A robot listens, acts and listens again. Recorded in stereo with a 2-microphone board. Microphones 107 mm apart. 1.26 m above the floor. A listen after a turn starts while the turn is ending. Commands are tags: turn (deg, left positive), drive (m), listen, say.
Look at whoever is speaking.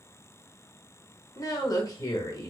<turn deg="35"/>
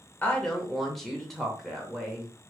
<say>Facing the woman speaking.</say>